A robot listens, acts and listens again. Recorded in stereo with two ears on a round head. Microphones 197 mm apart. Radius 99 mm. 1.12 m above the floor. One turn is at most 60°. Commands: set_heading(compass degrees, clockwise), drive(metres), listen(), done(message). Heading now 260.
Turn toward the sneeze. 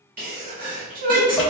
set_heading(295)
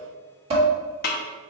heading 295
listen()
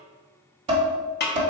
done("I heard a sneeze, but can't make it out now. It was about straight ahead or 110° right.")